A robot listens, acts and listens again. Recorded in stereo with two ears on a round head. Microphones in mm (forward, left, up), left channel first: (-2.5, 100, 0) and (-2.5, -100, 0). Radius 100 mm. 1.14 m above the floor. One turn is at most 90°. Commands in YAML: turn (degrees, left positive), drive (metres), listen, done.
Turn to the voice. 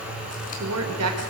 turn: -90
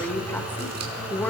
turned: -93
turn: 10
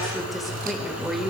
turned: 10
done: "Facing the woman speaking, over 4 m away."